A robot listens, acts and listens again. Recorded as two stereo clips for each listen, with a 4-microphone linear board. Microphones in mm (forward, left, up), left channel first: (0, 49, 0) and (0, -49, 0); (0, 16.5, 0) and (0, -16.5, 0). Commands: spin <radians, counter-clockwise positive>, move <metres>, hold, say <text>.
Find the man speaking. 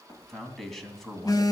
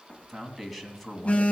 spin 0.52
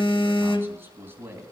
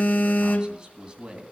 spin -0.44
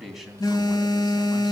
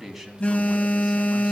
say Found it: a man speaking, straight ahead, 2 to 4 m away.